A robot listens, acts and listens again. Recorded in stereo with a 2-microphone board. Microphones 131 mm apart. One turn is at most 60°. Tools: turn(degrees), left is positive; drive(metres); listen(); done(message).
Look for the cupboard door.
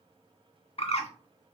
listen()
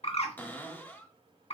turn(degrees=30)
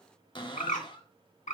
turn(degrees=60)
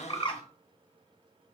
turn(degrees=60)
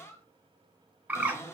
turn(degrees=25)
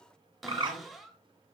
done("Found it: a cupboard door, straight ahead.")